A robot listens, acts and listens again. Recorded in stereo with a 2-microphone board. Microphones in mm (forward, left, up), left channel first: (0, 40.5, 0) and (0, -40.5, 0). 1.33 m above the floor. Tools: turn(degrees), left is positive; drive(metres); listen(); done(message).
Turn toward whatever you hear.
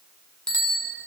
turn(degrees=30)
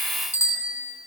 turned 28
turn(degrees=145)
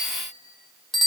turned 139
done("Found it: a bicycle bell, straight ahead, 2 to 4 m away.")